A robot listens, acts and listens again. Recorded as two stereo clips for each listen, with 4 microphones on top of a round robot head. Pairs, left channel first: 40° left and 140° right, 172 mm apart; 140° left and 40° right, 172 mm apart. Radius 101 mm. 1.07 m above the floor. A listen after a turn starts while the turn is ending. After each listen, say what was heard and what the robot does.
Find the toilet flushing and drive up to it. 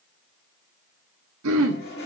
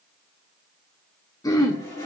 The toilet flushing: 70° left. Turn 70° left.
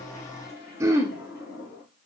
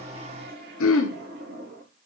Drive 1.0 m forward.
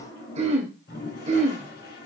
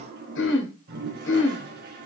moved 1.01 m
Drive 1.0 m forward.
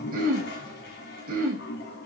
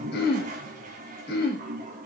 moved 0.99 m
Drive 1.0 m forward.
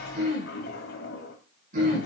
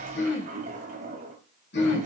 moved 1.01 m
The toilet flushing is now 10° left. Turn 10° left.
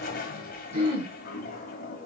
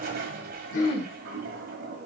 Drive 1.0 m forward.
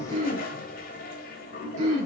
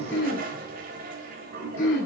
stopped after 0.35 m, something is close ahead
I am next to the toilet flushing.